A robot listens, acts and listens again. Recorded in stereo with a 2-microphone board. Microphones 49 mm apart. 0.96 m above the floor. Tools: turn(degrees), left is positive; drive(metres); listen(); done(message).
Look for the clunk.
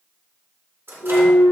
turn(degrees=90)
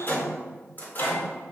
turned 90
done("Facing where the clunk came from. I can't hear it now.")